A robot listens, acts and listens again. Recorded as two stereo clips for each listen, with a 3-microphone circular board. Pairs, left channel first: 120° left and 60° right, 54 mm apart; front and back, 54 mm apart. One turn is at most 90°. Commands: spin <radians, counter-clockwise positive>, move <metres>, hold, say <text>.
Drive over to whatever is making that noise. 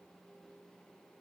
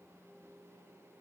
hold
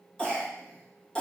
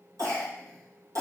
spin -1.57
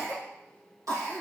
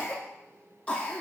spin -1.13
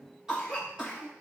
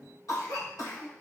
spin 0.35
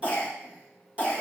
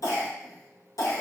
move 1.0
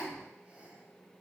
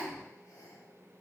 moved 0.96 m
spin 0.17
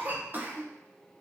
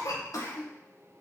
move 1.0
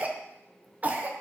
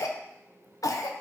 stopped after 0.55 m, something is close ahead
say Arrived at the cough, straight ahead.